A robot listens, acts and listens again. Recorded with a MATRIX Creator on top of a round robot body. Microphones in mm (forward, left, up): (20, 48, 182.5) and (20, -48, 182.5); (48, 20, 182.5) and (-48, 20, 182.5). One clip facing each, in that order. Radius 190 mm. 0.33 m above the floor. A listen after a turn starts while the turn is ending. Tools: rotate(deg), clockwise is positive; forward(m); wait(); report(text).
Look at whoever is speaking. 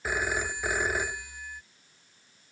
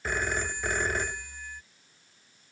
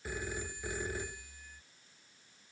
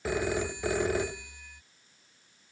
wait()
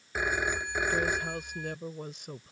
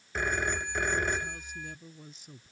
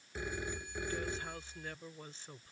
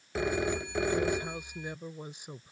rotate(-105)
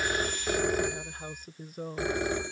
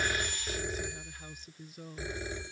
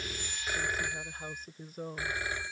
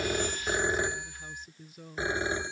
rotate(-50)
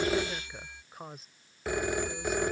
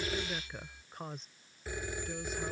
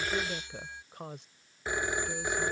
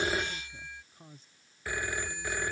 report("Facing the woman speaking.")